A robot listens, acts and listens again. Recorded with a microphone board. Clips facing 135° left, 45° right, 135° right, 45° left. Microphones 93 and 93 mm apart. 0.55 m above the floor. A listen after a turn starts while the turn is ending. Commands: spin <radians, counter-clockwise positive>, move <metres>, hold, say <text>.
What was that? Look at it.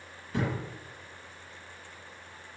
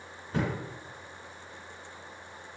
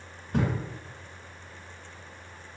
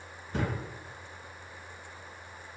spin -1.75
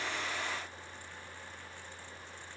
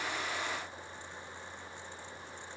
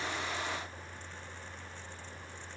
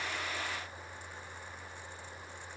say I heard a thud from this way, but can't make it out now.